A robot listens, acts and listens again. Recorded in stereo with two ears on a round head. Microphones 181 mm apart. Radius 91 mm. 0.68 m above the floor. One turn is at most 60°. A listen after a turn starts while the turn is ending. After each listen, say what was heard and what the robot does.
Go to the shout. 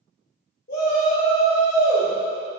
The shout: about 50° left or 130° left. Turn 50° left.
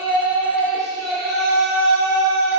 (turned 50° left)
Drive 1.0 m forward.
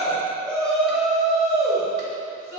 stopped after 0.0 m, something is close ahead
Blocked. The shout is further on, straight ahead.